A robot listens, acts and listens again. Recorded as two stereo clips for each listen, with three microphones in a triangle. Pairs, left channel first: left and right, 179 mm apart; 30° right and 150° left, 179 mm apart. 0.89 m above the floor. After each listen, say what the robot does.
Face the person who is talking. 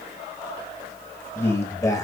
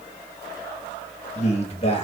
Turn 20° left.
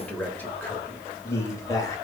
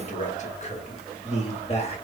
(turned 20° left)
Turn 20° left.
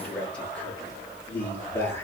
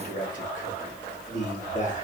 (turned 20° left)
Turn 15° left.
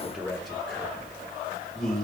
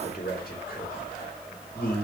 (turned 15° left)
Facing the man speaking.